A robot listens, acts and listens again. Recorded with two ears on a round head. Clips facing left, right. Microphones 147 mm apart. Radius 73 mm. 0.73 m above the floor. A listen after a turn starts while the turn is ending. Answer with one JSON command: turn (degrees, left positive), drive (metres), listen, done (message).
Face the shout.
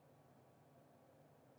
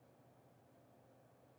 {"listen": true}
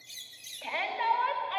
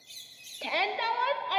{"turn": -50}
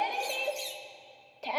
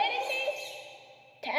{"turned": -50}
{"turn": -10}
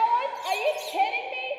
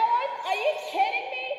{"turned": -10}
{"done": "Found it: a shout, straight ahead."}